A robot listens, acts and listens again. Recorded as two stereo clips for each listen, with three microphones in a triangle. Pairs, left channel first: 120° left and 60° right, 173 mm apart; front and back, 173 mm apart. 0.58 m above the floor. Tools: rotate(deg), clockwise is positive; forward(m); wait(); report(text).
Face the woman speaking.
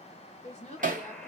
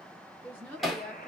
rotate(-80)
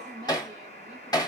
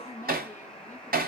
report("Facing the woman speaking.")